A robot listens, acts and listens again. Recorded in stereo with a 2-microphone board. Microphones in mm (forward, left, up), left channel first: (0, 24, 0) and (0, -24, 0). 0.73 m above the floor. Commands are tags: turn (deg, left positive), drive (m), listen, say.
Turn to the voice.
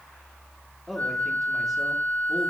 <turn deg="30"/>
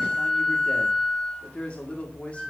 <turn deg="150"/>
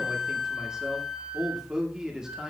<turn deg="-15"/>
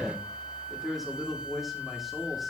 <say>Facing the man speaking, 1 to 2 m away.</say>